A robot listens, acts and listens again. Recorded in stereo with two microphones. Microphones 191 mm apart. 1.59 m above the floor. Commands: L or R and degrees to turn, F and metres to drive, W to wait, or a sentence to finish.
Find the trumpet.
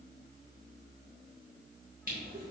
W
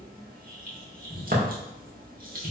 W
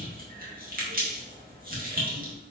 I can't make out a trumpet, only crushing.